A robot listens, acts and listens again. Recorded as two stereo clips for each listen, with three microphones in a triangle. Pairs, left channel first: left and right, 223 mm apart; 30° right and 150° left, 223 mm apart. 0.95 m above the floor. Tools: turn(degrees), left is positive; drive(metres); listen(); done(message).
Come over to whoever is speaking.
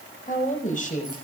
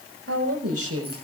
turn(degrees=145)
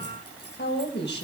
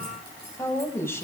turn(degrees=50)
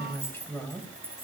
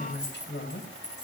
turn(degrees=10)
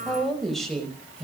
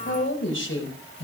drive(metres=1.0)
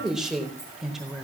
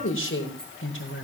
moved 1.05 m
drive(metres=1.0)
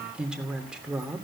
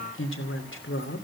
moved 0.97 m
drive(metres=1.0)
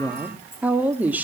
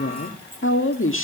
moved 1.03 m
drive(metres=1.0)
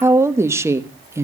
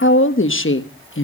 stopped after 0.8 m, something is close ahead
turn(degrees=-10)
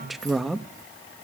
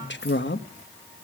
done("Arrived at the woman speaking, straight ahead.")